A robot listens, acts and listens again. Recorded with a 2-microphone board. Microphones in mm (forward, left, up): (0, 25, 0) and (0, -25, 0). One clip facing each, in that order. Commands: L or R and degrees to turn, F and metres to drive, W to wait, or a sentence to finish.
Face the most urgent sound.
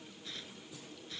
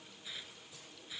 W
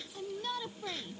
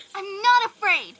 R90
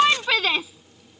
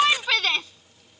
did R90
Facing the shout.